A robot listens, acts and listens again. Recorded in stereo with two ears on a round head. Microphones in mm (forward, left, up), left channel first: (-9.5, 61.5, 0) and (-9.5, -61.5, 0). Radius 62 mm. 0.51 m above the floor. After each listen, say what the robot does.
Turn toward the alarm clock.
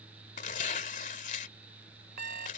Turn 70° right.
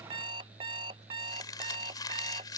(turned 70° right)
Turn 35° right.
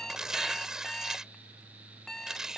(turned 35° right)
Found it: an alarm clock, straight ahead.